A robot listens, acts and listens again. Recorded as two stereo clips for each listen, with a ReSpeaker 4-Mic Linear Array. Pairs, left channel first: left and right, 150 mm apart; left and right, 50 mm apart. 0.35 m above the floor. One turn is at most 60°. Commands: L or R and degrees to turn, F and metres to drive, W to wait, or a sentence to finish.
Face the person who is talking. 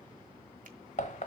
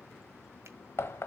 W
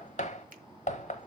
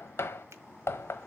W
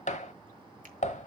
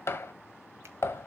I can't make out anyone speaking to turn to.